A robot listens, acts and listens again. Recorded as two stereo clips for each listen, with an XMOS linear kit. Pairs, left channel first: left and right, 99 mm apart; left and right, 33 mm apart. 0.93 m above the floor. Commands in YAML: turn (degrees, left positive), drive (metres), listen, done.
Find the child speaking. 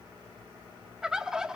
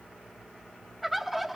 listen: true
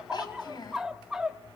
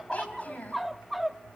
turn: 50
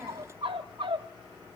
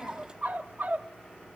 listen: true
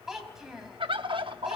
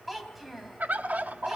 done: "Found it: a child speaking, straight ahead."